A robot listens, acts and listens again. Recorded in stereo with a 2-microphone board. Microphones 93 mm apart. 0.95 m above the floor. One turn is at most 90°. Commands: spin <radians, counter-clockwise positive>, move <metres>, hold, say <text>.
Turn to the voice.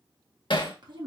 spin -0.87
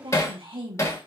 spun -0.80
spin -1.40
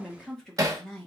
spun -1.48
say Found it: a woman speaking, straight ahead, 1 to 2 m away.